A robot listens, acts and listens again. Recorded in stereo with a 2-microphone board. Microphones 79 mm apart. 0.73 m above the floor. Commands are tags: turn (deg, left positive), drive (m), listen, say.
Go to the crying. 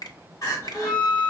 <turn deg="55"/>
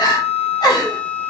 <turn deg="65"/>
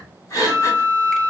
<turn deg="45"/>
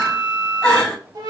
<turn deg="10"/>
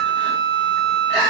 <drive m="1.0"/>
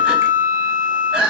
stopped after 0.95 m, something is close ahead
<turn deg="-15"/>
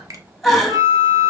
<say>I am next to the crying.</say>